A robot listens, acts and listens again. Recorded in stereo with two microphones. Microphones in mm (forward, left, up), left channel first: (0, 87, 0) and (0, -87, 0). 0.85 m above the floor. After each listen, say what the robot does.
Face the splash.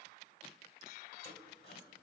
Keep listening.
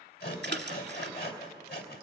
Turn 90° right.
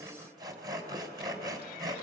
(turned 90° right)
Facing where the splash came from. I can't hear it now.